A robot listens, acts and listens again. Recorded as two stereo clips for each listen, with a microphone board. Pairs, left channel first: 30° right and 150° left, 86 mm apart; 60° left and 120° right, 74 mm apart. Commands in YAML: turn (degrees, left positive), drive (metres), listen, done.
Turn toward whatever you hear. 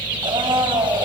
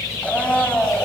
turn: 130
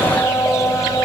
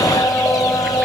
turn: 25
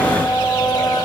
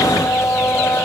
done: "Facing the blender."